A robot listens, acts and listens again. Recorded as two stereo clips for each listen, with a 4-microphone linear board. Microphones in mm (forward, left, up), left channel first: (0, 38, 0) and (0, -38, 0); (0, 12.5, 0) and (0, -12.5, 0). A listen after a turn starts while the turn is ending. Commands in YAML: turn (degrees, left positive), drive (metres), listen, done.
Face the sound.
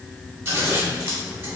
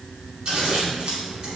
turn: -40
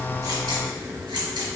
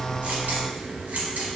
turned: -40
turn: -100
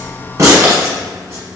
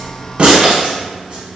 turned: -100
turn: -30
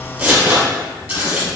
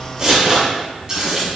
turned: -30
turn: -15
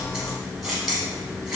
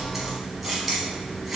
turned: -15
done: "Facing the scissors, 1 to 2 m away."